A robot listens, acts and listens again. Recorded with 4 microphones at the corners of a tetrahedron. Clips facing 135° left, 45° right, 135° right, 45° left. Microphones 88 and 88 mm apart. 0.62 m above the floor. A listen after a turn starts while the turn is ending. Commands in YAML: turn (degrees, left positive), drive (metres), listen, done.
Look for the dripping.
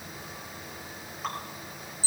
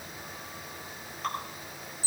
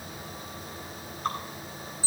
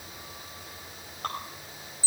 turn: 50
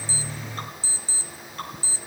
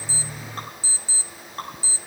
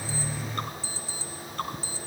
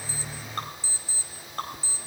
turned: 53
done: "Facing the dripping."